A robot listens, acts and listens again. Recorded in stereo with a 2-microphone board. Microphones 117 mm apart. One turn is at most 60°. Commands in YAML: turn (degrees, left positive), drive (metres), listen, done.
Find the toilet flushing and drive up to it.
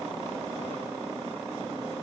listen: true
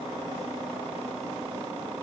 listen: true
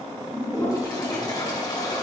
turn: 35
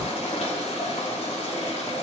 turn: 60
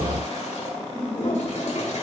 turn: 60
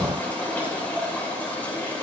turn: 15
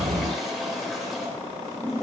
drive: 1.0
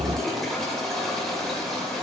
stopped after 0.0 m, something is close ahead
done: "Something is in my way. I am facing the toilet flushing but have not reached it."